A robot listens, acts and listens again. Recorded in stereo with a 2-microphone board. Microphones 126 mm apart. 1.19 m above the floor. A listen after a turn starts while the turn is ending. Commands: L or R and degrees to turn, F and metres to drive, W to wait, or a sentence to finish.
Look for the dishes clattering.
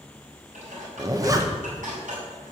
R90
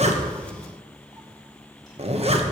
W
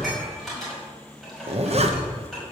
Found it: dishes clattering, straight ahead.